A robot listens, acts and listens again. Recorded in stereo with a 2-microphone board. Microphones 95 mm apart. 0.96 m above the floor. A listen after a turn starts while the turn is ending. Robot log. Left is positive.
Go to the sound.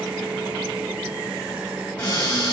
cmd yaw +30
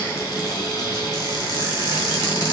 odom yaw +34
note: So it is at 130° left.
cmd yaw +130
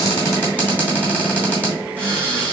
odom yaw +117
note: The cupboard door is now 15° left.
cmd yaw +15
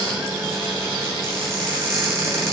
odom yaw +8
cmd fwd 1.0
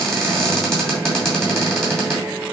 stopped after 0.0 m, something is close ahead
end: Something is in my way. I am facing the cupboard door but have not reached it.